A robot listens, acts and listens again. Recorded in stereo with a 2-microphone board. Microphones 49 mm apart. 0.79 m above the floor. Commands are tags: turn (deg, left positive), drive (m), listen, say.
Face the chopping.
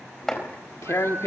<turn deg="30"/>
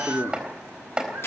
<turn deg="-20"/>
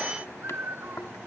<listen/>
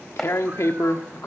<say>Facing the chopping.</say>